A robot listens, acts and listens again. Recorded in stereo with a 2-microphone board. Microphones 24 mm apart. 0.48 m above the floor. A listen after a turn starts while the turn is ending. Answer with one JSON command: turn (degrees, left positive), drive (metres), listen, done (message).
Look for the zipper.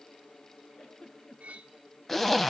{"turn": 30}
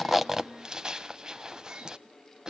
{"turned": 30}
{"turn": -30}
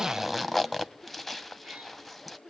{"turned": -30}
{"done": "Facing the zipper."}